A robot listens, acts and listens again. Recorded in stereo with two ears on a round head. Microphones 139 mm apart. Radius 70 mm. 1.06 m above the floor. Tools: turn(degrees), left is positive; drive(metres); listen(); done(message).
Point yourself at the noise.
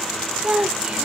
turn(degrees=-30)
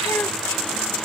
listen()
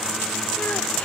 listen()
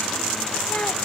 done("I heard a child speaking, but can't make it out now. It was about 20° left or 140° right.")